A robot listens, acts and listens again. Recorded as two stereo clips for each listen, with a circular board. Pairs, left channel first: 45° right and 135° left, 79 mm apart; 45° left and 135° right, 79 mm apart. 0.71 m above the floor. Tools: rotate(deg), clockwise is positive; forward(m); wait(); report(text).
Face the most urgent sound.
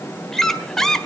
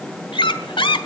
wait()
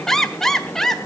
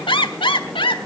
wait()
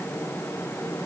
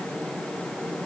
report("I can't make out anything urgent to turn to.")